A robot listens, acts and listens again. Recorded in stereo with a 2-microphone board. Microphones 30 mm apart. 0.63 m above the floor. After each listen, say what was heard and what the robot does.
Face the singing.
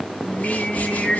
The singing: about 45° left or 135° left. Turn 45° left.
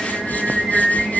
So it is at 15° right. Turn 15° right.
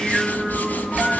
Keep listening.
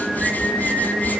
The singing is now 25° right. Turn 25° right.
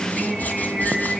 The singing is now 20° right. Turn 20° right.
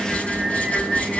Found it: singing, straight ahead, over 4 m away.